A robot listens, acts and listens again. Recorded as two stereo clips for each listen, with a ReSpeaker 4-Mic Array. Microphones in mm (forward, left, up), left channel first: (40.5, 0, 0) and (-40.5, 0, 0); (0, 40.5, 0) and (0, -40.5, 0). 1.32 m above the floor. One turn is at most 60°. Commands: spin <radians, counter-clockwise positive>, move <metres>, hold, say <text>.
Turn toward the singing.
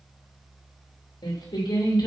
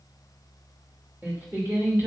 spin -0.44
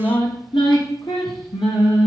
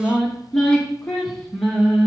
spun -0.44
say Facing the singing.